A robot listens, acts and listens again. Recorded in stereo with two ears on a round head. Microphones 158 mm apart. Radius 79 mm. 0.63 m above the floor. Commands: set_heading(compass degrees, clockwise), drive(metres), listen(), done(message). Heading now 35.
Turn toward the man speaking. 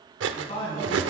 set_heading(5)
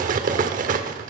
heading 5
listen()
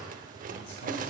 listen()
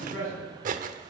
set_heading(260)
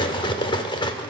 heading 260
listen()
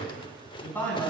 set_heading(250)
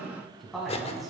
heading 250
done("Found it: a man speaking, straight ahead, over 4 m away.")